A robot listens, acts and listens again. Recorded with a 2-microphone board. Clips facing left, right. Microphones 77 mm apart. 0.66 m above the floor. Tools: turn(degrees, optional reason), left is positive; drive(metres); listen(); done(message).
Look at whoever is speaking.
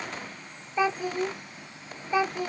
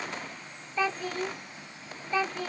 turn(degrees=15, reason="The child speaking: about 15° left or 165° left.")
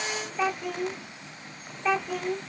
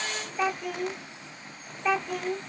done("Facing the child speaking.")